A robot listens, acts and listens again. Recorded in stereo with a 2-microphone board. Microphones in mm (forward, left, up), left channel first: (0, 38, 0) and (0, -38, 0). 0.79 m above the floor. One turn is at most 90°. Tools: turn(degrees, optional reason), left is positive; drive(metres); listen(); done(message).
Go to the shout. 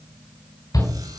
turn(degrees=55, reason="The shout: about 55° left or 125° left.")
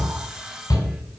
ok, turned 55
turn(degrees=65, reason="So it is at 65° left.")
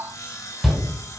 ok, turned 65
drive(metres=1.0)
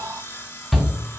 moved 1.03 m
drive(metres=1.0)
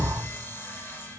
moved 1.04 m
listen()
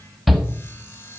drive(metres=1.0)
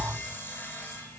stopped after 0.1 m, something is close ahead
listen()
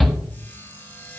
done("I am next to the shout.")